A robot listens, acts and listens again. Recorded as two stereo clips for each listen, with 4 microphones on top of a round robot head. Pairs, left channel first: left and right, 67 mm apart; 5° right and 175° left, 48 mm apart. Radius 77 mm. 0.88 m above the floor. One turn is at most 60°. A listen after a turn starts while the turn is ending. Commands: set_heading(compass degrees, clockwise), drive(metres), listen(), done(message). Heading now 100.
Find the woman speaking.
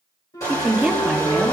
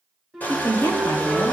done("Facing the woman speaking, 2 to 4 m away.")